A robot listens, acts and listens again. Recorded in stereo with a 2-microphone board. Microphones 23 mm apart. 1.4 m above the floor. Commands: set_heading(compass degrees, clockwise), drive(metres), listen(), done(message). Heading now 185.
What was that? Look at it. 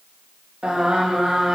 set_heading(240)
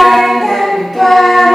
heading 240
done("Facing the singing, 2 to 4 m away.")